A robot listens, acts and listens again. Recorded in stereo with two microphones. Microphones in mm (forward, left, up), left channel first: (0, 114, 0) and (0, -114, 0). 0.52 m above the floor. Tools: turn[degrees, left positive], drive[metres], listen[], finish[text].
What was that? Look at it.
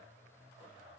Action: listen[]
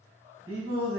Thought: The singing: about 70° right or 110° right.
Action: turn[-70]
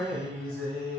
Thought: So it is at 35° right.
Action: turn[-35]
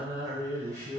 Thought: The singing is now 15° right.
Action: turn[-15]
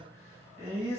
Action: finish[Facing the singing, 2 to 4 m away.]